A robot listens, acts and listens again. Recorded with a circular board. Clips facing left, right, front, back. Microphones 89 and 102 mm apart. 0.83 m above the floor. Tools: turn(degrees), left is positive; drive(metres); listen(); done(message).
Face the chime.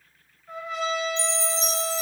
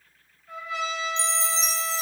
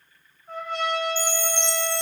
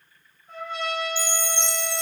turn(degrees=-25)
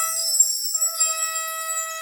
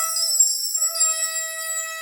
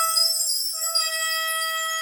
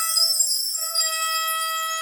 turn(degrees=-15)
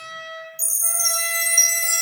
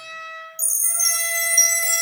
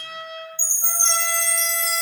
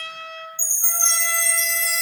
done("Found it: a chime, straight ahead.")